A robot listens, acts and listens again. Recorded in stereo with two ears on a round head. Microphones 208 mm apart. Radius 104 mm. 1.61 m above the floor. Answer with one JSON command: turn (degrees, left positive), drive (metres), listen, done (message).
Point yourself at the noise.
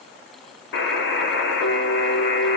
{"turn": 50}
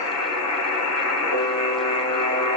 {"turn": 75}
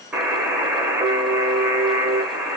{"done": "Facing the buzzer, under 1 m away."}